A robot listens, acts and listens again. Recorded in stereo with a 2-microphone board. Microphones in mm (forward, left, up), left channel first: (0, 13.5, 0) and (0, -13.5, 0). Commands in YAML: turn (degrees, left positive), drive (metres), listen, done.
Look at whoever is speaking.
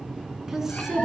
turn: -15
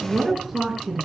done: "Found it: a woman speaking, straight ahead, over 4 m away."